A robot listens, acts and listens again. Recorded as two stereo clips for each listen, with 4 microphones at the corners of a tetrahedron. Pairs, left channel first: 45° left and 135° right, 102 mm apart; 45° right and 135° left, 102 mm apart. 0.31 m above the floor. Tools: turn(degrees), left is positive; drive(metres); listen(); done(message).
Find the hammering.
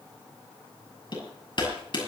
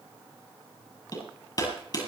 done("Found it: hammering, straight ahead.")